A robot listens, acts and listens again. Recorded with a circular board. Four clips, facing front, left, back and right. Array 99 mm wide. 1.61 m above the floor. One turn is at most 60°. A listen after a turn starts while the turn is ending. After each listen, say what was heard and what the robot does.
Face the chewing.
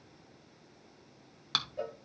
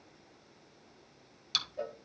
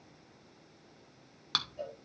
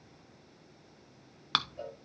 The chewing: 90° right. Turn 60° right.
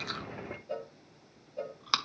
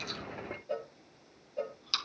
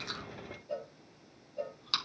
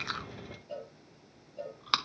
The chewing is now 50° right. Turn 50° right.
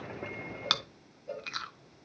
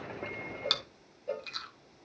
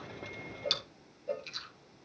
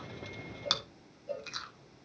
The chewing is now 10° right. Turn 10° right.
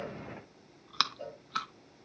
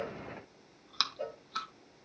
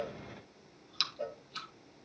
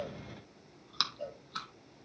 Found it: chewing, straight ahead.